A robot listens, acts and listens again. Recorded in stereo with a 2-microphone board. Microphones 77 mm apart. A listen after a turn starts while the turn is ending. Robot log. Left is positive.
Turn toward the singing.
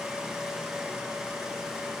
cmd idle
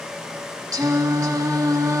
note: The singing: about 45° right or 135° right.
cmd yaw -45
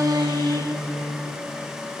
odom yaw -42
note: So it is at 85° right.
cmd yaw -85
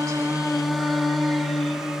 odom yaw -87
end: Found it: singing, straight ahead.